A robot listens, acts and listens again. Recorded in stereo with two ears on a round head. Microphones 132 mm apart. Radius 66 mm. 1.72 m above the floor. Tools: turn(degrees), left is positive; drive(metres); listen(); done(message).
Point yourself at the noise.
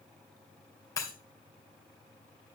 turn(degrees=25)
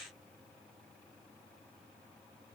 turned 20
listen()
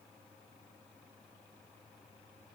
done("I heard breaking glass, but can't make it out now. It was about 5° left or 135° left.")